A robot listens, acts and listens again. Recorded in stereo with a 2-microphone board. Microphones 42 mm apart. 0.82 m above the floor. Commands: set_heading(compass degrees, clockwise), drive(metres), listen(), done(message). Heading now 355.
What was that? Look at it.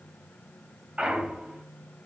set_heading(25)
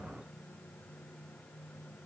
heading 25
listen()
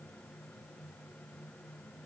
done("I heard a clunk, but can't make it out now. It was about straight ahead or 120° right.")